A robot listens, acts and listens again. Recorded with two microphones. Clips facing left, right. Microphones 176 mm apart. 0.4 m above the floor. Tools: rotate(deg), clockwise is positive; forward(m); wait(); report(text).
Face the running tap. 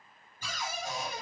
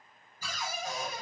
wait()
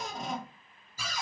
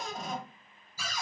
wait()
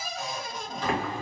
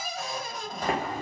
rotate(40)
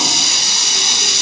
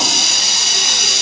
rotate(90)
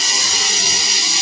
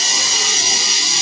report("Facing the running tap.")